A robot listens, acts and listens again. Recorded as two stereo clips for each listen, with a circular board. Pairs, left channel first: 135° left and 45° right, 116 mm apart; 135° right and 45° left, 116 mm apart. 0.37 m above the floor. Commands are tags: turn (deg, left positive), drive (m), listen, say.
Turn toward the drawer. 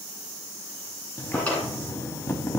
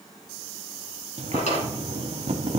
<turn deg="-150"/>
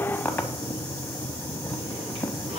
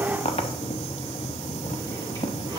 <listen/>
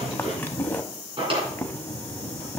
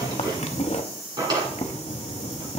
<turn deg="-10"/>
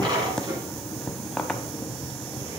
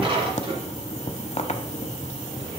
<say>Facing the drawer.</say>